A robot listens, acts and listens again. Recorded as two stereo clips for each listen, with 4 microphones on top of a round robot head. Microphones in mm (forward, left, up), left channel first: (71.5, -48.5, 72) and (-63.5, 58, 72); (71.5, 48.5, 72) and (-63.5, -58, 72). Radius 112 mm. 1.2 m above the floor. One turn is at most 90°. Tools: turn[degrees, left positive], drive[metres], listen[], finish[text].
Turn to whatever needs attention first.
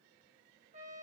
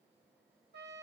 Action: listen[]
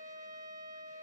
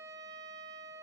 Action: listen[]
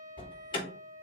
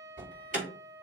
Thought: The alarm: 100° right.
Action: turn[-90]
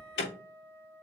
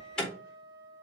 Thought: The alarm is now 50° right.
Action: turn[-50]
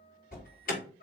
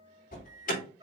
Action: finish[Found it: an alarm, straight ahead, over 4 m away.]